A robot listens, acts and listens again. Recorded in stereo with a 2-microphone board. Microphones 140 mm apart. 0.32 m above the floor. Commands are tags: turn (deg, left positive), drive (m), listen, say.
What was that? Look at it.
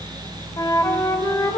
<turn deg="30"/>
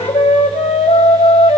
<turn deg="115"/>
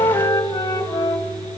<turn deg="40"/>
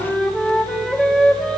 <say>Found it: a flute, straight ahead.</say>